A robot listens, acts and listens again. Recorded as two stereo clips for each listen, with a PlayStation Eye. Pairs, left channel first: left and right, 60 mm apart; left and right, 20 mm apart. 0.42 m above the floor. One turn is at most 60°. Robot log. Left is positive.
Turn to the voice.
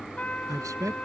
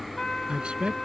note: The man speaking: about 70° right or 110° right.
cmd yaw -60
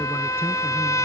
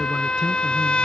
cmd idle
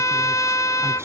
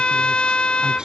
cmd idle
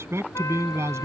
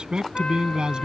note: So it is at 50° right.
cmd yaw -50
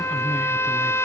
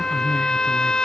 cmd idle
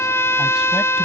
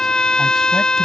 cmd idle
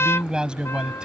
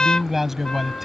note: The man speaking is now 15° right.
cmd yaw -15
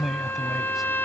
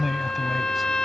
end: Facing the man speaking.